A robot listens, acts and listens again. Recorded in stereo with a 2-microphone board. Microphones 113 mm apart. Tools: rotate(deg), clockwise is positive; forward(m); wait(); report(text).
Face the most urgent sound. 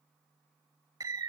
wait()
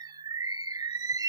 wait()
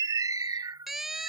rotate(30)
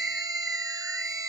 rotate(145)
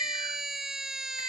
report("Facing the siren.")